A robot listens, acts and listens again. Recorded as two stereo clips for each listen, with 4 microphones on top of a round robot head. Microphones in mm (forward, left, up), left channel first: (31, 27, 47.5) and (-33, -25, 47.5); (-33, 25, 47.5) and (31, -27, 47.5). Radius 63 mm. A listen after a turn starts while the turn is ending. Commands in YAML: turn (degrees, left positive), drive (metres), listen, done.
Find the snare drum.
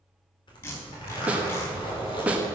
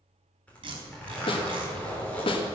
turn: 145
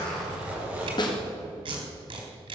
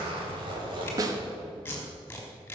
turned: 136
turn: 10
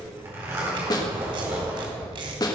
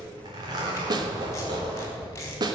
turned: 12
done: "Facing the snare drum, 1 to 2 m away."